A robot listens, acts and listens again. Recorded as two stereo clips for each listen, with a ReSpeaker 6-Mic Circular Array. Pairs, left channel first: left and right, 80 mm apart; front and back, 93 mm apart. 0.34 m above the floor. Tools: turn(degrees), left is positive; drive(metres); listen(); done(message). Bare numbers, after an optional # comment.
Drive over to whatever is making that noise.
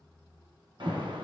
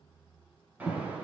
# The alarm: 105° right.
turn(-105)
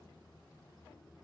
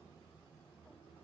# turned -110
listen()
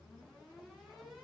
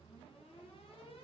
drive(1.0)
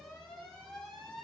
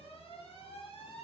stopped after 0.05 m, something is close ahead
done("Blocked. The alarm is further on, straight ahead.")